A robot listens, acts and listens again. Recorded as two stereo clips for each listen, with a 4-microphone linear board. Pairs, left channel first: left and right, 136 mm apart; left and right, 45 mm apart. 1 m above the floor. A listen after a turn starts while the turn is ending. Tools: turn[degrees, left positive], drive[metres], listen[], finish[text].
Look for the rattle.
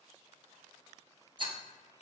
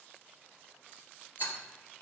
Thought: The rattle: about 35° right or 145° right.
Action: turn[-35]
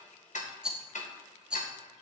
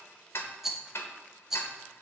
Action: finish[Facing the rattle, under 1 m away.]